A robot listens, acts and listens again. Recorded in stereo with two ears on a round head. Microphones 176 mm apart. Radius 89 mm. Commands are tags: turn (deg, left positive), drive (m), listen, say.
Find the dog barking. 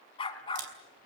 <turn deg="25"/>
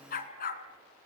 <turn deg="135"/>
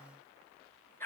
<turn deg="10"/>
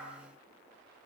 <say>Found it: a dog barking, straight ahead.</say>